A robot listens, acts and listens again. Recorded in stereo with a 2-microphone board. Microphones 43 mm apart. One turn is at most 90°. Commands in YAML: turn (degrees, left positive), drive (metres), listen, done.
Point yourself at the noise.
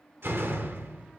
turn: -60
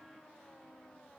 listen: true
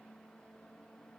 done: "I heard a door slam, but can't make it out now. It was about straight ahead or 60° right."